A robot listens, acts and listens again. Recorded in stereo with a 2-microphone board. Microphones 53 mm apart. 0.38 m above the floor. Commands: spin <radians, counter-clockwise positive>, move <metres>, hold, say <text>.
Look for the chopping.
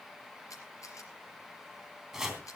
spin -0.52
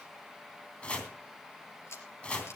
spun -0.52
spin 0.35
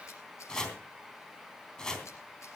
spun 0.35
spin 0.17
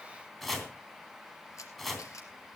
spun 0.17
say Facing the chopping.